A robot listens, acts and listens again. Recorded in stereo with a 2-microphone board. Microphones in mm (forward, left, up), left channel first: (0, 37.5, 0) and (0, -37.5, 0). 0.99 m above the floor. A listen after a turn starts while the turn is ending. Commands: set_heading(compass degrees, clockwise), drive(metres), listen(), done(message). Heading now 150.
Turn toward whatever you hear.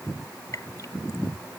set_heading(100)
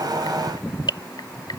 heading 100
set_heading(25)
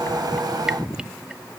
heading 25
listen()
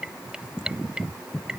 set_heading(35)
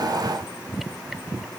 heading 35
listen()
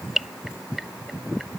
done("Found it: dripping, straight ahead.")